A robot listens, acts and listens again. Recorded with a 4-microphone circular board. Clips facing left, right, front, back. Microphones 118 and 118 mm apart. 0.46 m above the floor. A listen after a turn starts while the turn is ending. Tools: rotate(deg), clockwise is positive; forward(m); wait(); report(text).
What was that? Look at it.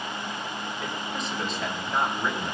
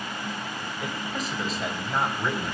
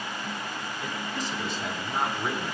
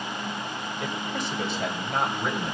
rotate(-180)
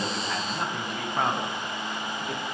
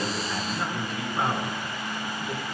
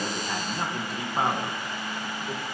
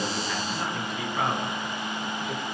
rotate(-55)
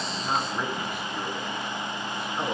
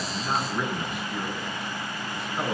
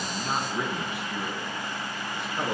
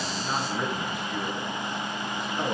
report("Facing the man speaking, over 4 m away.")